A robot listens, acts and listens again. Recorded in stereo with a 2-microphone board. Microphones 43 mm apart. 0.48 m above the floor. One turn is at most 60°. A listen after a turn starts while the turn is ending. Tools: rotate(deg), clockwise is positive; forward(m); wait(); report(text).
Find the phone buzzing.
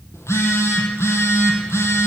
rotate(-60)
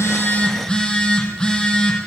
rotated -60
rotate(-20)
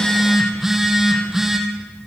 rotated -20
rotate(10)
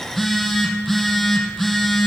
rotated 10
report("Facing the phone buzzing.")